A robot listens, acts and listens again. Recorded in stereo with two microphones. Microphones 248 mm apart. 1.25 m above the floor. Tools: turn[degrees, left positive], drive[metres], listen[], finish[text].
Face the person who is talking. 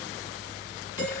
Action: listen[]
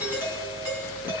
Action: listen[]
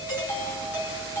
Action: finish[I can't make out anyone speaking, only a doorbell.]